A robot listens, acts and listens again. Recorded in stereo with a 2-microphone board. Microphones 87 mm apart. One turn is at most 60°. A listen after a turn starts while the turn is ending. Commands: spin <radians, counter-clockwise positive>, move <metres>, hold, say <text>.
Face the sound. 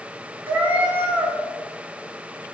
spin -0.35
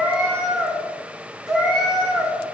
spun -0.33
say Facing the cat meowing, 1 to 2 m away.